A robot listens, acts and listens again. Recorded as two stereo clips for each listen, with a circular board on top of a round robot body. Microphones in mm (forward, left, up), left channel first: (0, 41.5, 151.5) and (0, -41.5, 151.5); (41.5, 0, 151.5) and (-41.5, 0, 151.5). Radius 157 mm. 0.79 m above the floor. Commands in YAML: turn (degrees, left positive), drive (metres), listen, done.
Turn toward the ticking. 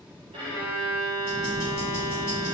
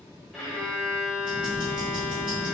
turn: 155
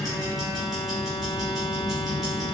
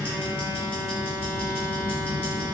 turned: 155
done: "Found it: ticking, straight ahead."